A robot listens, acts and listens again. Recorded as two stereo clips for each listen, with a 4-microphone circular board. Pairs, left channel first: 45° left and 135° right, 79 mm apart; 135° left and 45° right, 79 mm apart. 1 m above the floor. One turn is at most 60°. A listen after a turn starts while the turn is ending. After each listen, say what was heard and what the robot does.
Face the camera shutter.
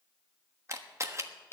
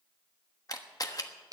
The camera shutter: 175° left. Turn 60° left.
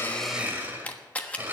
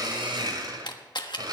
The camera shutter is now 115° left. Turn 60° left.
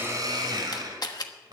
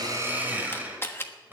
The camera shutter is now 75° left. Turn 60° left.
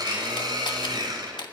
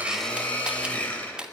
The camera shutter is now 35° left. Turn 35° left.
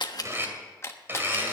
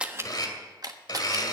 The camera shutter is now 10° right. Turn 10° right.
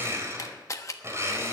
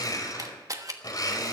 Facing the camera shutter, 1 to 2 m away.